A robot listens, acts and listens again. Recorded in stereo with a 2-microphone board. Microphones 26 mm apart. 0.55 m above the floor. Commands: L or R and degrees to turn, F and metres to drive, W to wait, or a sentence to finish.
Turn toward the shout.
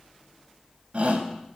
R50
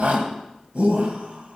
R75
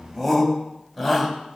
R10
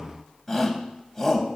Found it: a shout, straight ahead, 2 to 4 m away.